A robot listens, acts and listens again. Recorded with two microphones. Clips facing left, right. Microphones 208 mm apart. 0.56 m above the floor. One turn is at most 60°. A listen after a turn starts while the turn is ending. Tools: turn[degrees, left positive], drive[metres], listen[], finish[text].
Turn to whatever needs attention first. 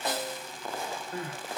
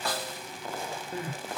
Thought: The crying: about 25° right or 155° right.
Action: turn[-25]
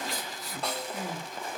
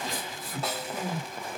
Thought: So it is at 130° right.
Action: turn[-60]
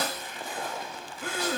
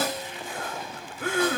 Thought: The crying is now 60° right.
Action: turn[-60]
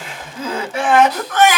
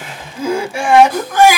Thought: The crying is now 10° right.
Action: turn[-10]
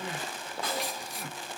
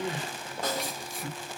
Action: finish[Found it: crying, straight ahead, 1 to 2 m away.]